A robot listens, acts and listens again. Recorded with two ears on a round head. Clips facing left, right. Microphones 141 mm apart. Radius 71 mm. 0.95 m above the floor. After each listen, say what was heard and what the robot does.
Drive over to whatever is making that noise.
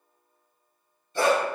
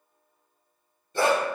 The dog barking: about 35° right or 145° right. Turn 35° right.
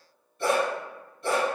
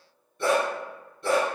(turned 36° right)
So it is at 110° right. Turn 110° right.
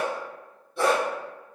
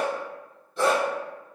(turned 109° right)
Drive 1.0 m forward.
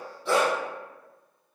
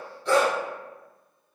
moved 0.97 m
Drive 1.0 m forward.
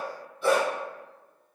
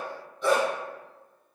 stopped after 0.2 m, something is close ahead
The dog barking is now 10° left. Turn 10° left.
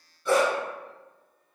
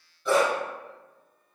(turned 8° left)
Arrived at the dog barking, straight ahead.